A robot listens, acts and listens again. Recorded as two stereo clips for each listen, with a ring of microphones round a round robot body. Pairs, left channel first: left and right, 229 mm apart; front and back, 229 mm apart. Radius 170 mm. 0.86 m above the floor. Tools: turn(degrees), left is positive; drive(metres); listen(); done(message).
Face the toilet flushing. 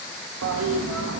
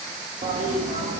turn(degrees=-115)
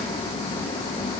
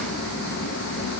turn(degrees=20)
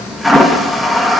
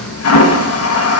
done("Facing the toilet flushing, under 1 m away.")